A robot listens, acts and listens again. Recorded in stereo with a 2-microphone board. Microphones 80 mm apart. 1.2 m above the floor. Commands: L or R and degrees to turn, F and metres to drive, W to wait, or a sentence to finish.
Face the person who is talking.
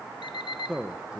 R30
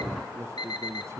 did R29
R140
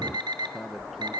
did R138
Found it: a man speaking, straight ahead.